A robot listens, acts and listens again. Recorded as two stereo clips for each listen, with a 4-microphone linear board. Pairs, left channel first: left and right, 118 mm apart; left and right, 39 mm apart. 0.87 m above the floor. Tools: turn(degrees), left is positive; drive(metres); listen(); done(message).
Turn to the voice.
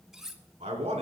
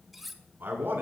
turn(degrees=-90)
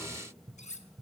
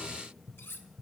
listen()
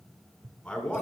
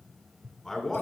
turn(degrees=10)
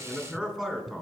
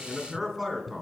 done("Facing the man speaking.")